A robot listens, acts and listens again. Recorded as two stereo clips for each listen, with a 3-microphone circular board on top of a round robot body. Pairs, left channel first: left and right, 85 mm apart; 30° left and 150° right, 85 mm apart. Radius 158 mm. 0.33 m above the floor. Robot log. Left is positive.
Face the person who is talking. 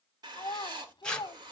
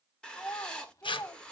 note: The child speaking: 75° left.
cmd yaw +75
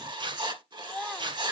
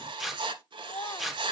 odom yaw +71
end: Found it: a child speaking, straight ahead, 1 to 2 m away.